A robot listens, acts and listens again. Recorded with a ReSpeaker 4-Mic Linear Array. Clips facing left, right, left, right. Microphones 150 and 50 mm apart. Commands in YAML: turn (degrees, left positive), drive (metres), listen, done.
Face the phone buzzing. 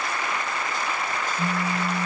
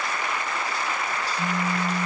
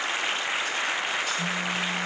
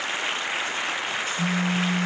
turn: 30
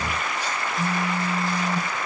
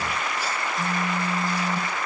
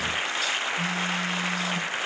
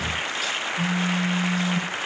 turn: 140
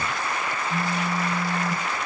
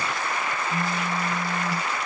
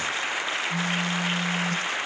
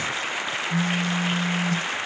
done: "Found it: a phone buzzing, straight ahead, over 4 m away."